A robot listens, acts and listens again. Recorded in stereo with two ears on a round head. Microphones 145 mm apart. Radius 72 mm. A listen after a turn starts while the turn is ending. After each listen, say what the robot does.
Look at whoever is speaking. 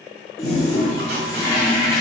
Keep listening.
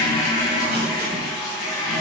Keep listening.
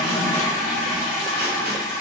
I can't make out anyone speaking, only a toilet flushing.